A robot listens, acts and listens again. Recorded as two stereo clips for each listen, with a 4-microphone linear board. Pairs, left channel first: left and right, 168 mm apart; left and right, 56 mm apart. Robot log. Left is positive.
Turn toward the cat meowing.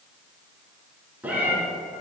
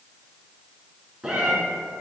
cmd yaw -30
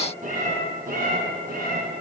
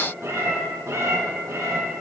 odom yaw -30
note: So it is at 115° right.
cmd yaw -115
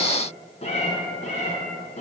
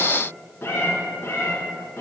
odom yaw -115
note: The cat meowing is now 45° left.
cmd yaw +45
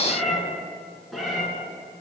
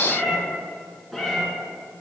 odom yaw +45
end: Facing the cat meowing, 1 to 2 m away.